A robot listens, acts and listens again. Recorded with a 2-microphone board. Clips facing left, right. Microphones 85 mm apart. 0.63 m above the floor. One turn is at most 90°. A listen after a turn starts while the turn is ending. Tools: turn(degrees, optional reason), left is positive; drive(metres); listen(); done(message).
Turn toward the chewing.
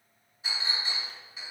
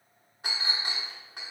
listen()
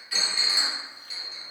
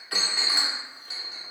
listen()
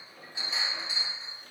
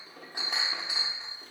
done("I can't make out chewing, only a clink.")